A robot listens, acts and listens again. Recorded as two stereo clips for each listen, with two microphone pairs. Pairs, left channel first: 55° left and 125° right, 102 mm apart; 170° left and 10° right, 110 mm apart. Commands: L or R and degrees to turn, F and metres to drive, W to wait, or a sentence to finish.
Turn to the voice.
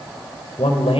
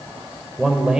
L75
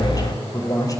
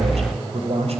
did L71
Facing the man speaking.